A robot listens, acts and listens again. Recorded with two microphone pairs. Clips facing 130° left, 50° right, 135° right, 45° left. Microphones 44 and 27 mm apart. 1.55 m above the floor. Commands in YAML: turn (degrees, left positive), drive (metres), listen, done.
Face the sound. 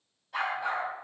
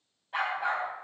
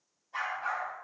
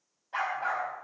turn: 15
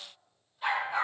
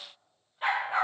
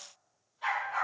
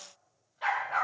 done: "Facing the dog barking, over 4 m away."